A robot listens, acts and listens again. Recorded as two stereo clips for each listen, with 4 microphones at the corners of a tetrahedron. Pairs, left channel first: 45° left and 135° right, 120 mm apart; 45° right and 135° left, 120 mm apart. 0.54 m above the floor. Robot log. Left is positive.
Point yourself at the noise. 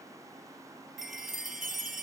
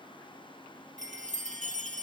note: The chime: 45° right.
cmd yaw -45
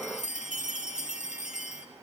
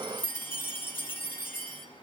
note: The chime is now 30° left.
cmd yaw +30
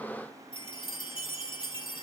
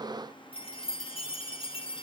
end: Facing the chime, over 4 m away.